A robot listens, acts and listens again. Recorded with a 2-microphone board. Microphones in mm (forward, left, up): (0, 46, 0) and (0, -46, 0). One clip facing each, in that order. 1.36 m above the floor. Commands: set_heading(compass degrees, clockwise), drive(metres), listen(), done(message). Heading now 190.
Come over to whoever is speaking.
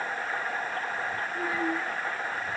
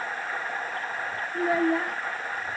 set_heading(255)
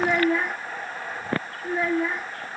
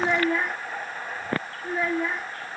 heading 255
drive(1.0)
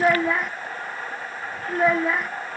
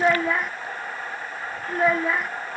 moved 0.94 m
drive(1.0)
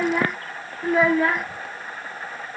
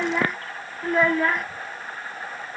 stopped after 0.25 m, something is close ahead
done("Arrived at the child speaking, straight ahead.")